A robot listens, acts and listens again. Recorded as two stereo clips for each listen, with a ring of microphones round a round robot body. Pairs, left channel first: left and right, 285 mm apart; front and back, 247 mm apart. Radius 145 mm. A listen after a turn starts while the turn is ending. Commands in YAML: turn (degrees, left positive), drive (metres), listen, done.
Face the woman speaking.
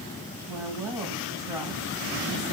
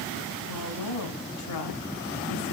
turn: -10
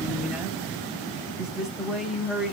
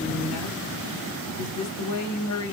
done: "Facing the woman speaking."